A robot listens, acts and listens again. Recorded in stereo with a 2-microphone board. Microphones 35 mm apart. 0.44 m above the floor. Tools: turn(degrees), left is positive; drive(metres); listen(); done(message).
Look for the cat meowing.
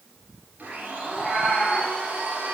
turn(degrees=30)
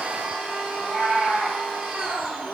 turn(degrees=150)
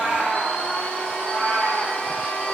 turn(degrees=65)
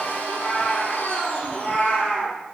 turn(degrees=45)
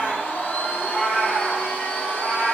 turn(degrees=15)
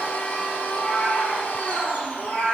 done("Found it: a cat meowing, straight ahead, over 4 m away.")